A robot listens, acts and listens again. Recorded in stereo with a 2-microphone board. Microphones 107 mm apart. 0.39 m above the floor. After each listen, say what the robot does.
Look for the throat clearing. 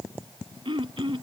Turn 50° right.
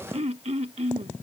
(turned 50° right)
Turn 75° right.
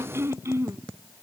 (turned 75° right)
Turn 25° right.
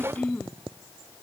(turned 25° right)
Turn 10° left.
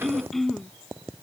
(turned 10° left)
Found it: throat clearing, straight ahead.